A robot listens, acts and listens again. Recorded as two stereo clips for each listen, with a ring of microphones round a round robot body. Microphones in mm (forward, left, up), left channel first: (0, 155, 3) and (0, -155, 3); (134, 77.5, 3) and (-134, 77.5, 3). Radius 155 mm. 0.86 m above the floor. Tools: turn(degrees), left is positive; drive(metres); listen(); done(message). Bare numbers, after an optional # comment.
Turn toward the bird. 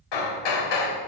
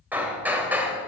listen()
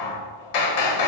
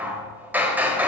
listen()
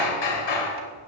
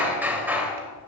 done("I can't make out a bird, only hammering.")